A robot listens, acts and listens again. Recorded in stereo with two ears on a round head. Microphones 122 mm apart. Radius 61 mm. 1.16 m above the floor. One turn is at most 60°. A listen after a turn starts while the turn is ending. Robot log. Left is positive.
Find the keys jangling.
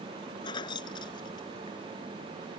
note: The keys jangling: about 35° left or 145° left.
cmd yaw +35
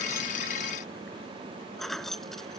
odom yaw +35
end: Found it: keys jangling, straight ahead.